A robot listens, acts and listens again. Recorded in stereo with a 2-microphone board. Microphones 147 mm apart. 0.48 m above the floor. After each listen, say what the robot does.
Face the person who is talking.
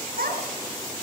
Turn 90° right.
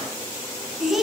Found it: a child speaking, straight ahead.